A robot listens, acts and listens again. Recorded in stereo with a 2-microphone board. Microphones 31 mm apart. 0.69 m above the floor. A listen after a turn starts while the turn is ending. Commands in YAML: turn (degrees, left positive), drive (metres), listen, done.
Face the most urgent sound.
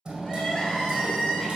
turn: 30
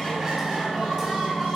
done: "Facing the crying."